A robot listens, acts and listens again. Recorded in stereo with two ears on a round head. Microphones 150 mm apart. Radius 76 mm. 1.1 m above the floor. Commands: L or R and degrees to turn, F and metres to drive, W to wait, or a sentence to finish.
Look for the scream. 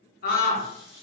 L50
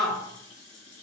Facing the scream.